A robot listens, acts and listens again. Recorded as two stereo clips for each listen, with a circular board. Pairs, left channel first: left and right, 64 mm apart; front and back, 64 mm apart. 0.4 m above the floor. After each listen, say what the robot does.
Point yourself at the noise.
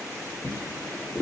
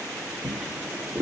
Turn 105° left.
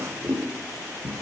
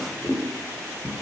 Turn 20° right.
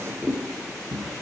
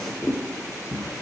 Facing the drawer.